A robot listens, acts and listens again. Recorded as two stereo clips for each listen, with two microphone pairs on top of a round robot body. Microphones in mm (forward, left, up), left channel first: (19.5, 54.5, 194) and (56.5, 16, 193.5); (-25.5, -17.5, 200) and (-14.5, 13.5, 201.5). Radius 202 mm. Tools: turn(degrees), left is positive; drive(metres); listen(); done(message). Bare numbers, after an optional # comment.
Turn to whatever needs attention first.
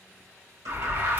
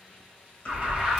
done("Facing the alarm, 1 to 2 m away.")